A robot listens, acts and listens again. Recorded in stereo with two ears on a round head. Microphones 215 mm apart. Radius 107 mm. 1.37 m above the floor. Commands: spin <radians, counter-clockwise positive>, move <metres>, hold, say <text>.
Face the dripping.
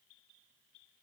hold
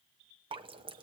spin -0.35
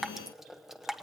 say Found it: dripping, straight ahead.